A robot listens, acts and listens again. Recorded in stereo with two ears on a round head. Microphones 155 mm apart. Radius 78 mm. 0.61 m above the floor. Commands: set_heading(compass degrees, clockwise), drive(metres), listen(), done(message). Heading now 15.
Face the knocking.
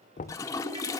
set_heading(330)
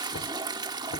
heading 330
set_heading(245)
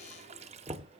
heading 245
set_heading(270)
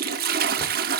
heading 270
listen()
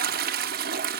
listen()
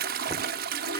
done("I heard knocking from this way, but can't make it out now.")